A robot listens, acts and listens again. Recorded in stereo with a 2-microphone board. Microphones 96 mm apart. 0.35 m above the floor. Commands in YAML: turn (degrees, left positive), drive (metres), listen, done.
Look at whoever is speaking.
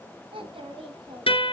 turn: -70
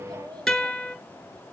turn: -50
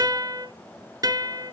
listen: true
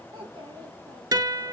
turn: -50
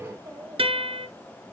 turn: -15
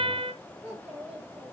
done: "Found it: a child speaking, straight ahead."